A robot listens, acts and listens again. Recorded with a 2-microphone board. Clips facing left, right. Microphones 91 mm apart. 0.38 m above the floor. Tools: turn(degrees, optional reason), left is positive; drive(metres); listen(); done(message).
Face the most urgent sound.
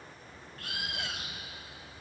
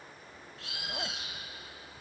listen()
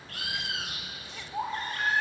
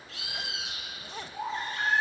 turn(degrees=50, reason="The baby crying: about 50° left or 130° left.")
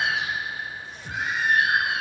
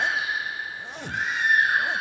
done("Found it: a baby crying, straight ahead, over 4 m away.")